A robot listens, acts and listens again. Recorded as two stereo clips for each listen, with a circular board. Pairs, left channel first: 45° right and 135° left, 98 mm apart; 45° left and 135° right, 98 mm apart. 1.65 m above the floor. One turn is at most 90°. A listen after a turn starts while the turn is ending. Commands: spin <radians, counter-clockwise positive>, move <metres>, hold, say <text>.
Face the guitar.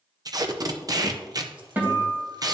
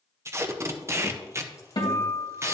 spin 1.22
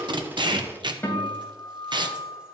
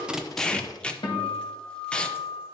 spin 0.35
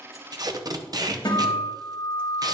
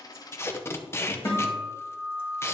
say Facing the guitar.